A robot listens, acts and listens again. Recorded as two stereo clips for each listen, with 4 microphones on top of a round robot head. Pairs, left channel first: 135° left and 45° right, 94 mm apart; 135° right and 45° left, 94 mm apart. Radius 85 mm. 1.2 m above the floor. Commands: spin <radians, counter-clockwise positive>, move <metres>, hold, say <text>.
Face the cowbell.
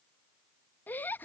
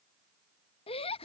hold
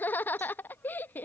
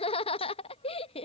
hold
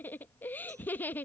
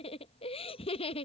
say I can't make out a cowbell to turn to.